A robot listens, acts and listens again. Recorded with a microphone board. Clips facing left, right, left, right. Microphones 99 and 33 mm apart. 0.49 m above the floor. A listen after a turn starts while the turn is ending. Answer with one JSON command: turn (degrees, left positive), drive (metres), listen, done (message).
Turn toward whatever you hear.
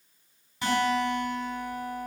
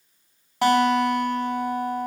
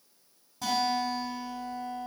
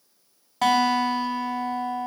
{"turn": -75}
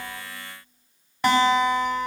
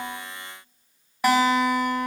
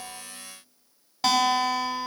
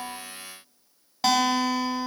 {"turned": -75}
{"done": "Facing the guitar, 2 to 4 m away."}